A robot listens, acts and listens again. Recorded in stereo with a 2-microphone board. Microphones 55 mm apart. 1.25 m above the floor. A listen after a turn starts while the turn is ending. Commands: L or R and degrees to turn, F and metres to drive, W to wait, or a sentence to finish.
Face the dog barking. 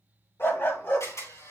L45
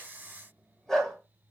L10
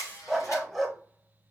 Found it: a dog barking, straight ahead.